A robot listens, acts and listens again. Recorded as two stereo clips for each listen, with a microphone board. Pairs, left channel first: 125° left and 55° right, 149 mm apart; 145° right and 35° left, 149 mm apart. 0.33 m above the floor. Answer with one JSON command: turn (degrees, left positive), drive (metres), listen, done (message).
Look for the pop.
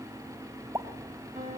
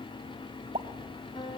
{"turn": 10}
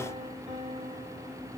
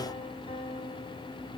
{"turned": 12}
{"done": "I heard a pop from this way, but can't make it out now."}